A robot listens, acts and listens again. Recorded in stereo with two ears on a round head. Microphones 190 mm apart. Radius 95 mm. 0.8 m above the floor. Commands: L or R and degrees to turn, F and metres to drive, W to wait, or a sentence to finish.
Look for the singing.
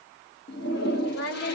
L65
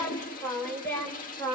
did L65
L10
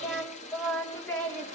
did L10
Found it: singing, straight ahead.